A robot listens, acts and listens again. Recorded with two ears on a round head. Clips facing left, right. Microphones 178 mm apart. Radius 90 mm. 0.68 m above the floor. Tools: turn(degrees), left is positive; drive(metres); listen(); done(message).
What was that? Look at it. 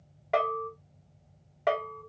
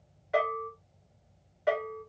turn(degrees=65)
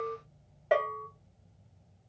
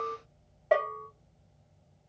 turn(degrees=15)
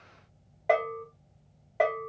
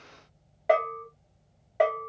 done("Found it: a bell, straight ahead.")